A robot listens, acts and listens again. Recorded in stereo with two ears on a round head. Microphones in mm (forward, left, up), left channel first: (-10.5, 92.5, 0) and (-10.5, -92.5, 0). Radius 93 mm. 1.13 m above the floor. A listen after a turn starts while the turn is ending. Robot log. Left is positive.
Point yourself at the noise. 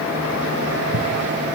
note: The scissors: about 60° right or 120° right.
cmd yaw -60
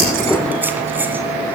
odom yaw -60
cmd idle
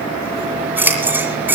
note: So it is at 10° right.
cmd yaw -10
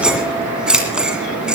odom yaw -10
end: Facing the scissors.